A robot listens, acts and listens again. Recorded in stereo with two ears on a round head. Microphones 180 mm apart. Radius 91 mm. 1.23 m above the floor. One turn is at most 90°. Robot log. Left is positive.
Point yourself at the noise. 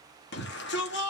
note: The shout: about 55° left or 125° left.
cmd yaw +55
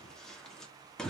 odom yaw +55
end: Facing the shout.